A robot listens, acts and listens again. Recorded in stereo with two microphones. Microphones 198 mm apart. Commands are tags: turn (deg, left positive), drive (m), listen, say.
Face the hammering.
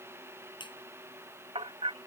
<turn deg="-30"/>
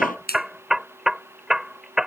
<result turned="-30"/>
<say>Found it: hammering, straight ahead.</say>